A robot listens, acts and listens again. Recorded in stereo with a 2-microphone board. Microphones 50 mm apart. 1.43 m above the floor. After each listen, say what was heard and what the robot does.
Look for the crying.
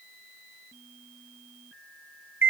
Keep listening.
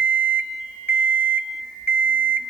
Keep listening.
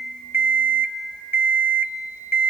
I can't make out crying, only an alarm clock.